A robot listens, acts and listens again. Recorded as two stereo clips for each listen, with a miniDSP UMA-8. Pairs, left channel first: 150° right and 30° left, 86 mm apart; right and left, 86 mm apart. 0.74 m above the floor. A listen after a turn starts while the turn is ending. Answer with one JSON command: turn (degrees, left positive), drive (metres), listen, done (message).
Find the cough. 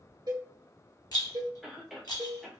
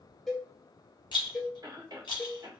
{"turn": 115}
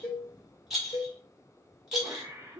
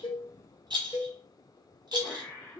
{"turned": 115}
{"turn": -15}
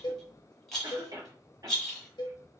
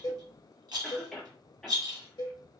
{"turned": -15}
{"done": "Facing the cough."}